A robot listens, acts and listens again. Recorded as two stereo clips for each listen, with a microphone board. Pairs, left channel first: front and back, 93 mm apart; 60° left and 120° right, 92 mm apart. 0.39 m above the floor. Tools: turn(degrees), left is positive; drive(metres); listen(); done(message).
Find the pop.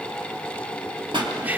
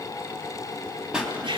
turn(degrees=160)
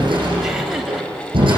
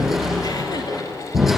done("I heard a pop from this way, but can't make it out now.")